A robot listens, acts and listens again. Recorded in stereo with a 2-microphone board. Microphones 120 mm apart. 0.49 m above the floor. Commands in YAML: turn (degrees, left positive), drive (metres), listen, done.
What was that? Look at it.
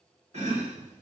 turn: -55
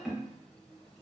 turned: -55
done: "Found it: chopping, straight ahead."